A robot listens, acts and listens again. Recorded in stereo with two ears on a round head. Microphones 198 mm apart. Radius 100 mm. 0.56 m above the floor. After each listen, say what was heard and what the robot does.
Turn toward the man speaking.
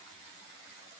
Keep listening.
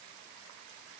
Keep listening.
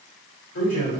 The man speaking: about 70° left or 110° left. Turn 70° left.
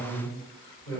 So it is at 20° left. Turn 20° left.
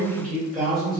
Found it: a man speaking, straight ahead.